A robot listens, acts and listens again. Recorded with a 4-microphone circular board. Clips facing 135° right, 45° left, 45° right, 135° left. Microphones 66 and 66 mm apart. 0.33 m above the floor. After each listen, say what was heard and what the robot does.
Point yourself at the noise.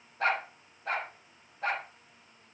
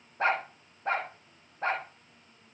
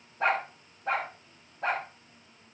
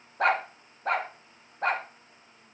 The dog barking: 100° left. Turn 100° left.
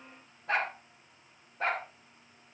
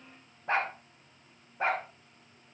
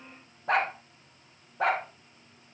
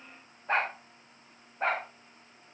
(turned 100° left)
The dog barking is now 25° right. Turn 25° right.
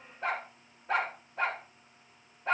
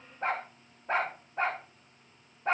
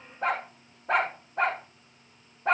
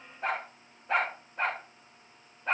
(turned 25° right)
The dog barking is now 15° right. Turn 15° right.
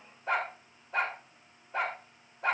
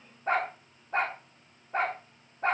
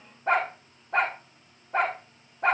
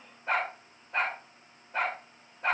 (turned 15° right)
Found it: a dog barking, straight ahead.